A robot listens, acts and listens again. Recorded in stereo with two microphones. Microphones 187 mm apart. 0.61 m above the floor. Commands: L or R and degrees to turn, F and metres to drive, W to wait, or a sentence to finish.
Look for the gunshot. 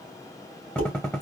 L30
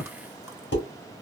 L145
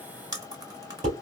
I heard a gunshot from this way, but can't make it out now.